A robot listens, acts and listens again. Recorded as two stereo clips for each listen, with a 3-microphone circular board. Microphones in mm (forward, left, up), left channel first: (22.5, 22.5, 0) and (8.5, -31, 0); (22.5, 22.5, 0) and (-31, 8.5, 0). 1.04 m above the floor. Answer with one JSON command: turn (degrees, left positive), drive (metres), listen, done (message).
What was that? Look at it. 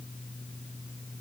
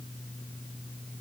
{"listen": true}
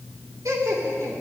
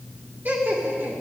{"turn": -115}
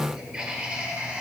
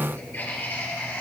{"turn": -40}
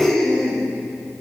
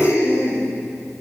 {"turn": -20}
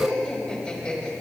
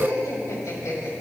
{"done": "Found it: laughter, straight ahead, over 4 m away."}